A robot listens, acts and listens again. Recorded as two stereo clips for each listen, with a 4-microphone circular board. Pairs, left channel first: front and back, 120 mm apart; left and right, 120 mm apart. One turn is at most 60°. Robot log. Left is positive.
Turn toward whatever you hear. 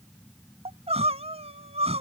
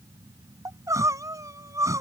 note: The crying: 150° right.
cmd yaw -60
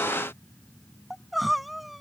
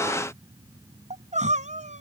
note: The crying is now 90° right.
cmd yaw -60
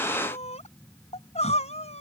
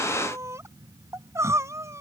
note: The crying is now 25° right.
cmd yaw -25
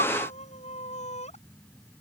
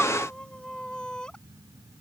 note: The crying is now 10° left.
cmd yaw +10
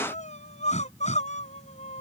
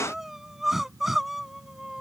end: Facing the crying.